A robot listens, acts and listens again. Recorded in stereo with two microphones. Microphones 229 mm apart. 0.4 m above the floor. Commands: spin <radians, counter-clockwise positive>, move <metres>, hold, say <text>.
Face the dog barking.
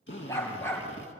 spin 0.52
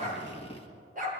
spin -0.61
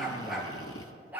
spin -0.17
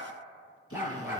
spin -0.17
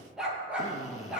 say Facing the dog barking.